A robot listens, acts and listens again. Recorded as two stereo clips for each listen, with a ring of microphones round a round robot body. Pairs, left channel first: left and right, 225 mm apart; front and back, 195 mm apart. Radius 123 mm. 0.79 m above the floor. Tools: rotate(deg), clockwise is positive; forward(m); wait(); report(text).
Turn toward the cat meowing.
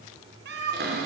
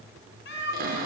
rotate(45)
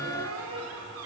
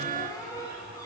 wait()
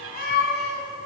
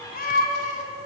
rotate(-50)
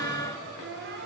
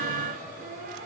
wait()
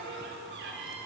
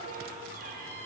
wait()
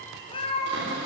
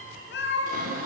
rotate(-25)
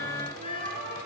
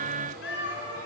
rotate(-20)
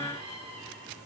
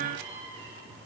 wait()
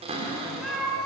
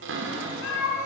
report("Found it: a cat meowing, straight ahead, 2 to 4 m away.")